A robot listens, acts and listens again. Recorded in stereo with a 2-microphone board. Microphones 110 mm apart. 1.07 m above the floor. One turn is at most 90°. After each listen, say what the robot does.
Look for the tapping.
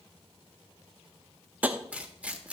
Turn 30° right.
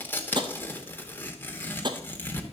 Turn 90° right.
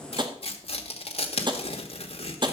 Turn 45° right.
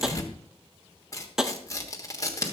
Facing the tapping.